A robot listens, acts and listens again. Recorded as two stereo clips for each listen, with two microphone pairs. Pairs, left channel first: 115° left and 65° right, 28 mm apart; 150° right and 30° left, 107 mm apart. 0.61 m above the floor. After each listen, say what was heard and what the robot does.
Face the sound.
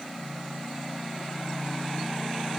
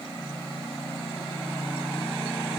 Keep listening.
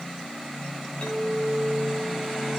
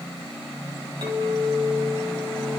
The clink: 75° left. Turn 75° left.
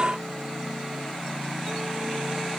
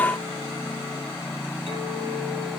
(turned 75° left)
Keep listening.
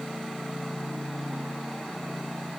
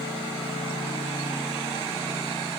Keep listening.
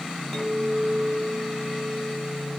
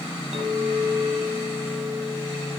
The clink is now 25° left. Turn 25° left.
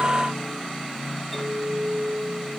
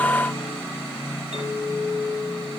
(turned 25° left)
The clink is now 25° left. Turn 25° left.
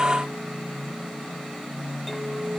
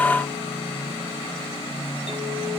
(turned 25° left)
Keep listening.
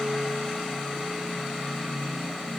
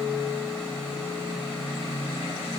Keep listening.
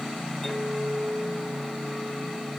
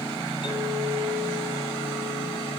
The clink is now 15° left. Turn 15° left.
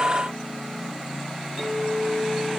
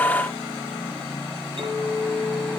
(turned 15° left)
Found it: a clink, straight ahead, 2 to 4 m away.